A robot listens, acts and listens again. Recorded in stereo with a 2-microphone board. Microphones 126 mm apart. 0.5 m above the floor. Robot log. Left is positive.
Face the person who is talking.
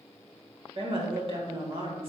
note: The woman speaking: about 45° right or 135° right.
cmd yaw -45
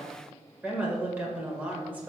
note: So it is at 15° right.
cmd yaw -15
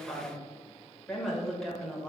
end: Facing the woman speaking, 2 to 4 m away.